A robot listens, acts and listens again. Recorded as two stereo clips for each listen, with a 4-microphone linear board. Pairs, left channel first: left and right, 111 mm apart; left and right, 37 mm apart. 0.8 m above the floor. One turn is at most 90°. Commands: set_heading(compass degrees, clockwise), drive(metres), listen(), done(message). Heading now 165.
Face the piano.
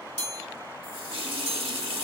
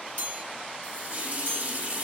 listen()
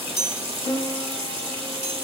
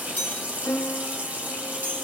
set_heading(100)
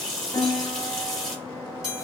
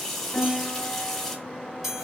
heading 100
set_heading(70)
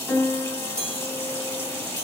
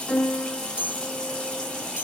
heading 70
set_heading(60)
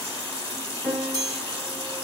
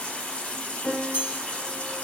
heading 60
done("Found it: a piano, straight ahead, 1 to 2 m away.")